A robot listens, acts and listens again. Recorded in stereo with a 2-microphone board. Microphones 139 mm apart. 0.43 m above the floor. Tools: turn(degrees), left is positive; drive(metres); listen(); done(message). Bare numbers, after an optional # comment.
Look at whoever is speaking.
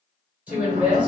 turn(-30)
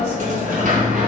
listen()
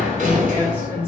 listen()
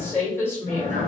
# So it is at 20° left.
turn(20)
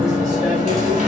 listen()
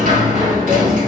listen()
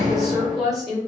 done("Found it: a woman speaking, straight ahead, 1 to 2 m away.")